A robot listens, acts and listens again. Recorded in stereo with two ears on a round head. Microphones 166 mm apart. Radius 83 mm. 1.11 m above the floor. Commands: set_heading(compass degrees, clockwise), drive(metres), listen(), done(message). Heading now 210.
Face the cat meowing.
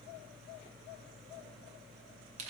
listen()
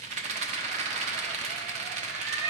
set_heading(250)
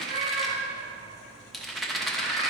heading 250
set_heading(355)
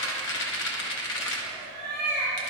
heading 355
done("Facing the cat meowing.")